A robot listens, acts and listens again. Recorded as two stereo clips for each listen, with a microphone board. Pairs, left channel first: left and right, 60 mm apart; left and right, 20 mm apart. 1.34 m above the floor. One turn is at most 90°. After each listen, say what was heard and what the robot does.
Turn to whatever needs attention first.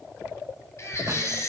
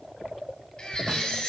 The baby crying: about 50° left or 130° left. Turn 50° left.
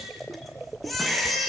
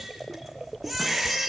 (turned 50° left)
Facing the baby crying, over 4 m away.